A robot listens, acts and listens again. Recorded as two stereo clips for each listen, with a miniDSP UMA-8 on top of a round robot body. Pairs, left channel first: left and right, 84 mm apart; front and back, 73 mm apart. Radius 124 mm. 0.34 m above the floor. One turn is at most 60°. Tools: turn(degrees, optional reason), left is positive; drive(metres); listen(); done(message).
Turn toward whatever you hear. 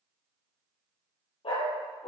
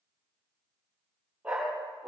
turn(degrees=60, reason="The dog barking: 105° left.")
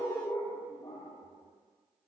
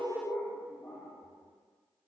turn(degrees=50, reason="The dog barking is now 50° left.")
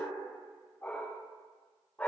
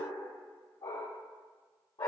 turn(degrees=20, reason="The dog barking is now 20° left.")
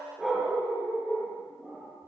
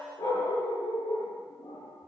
done("Facing the dog barking, over 4 m away.")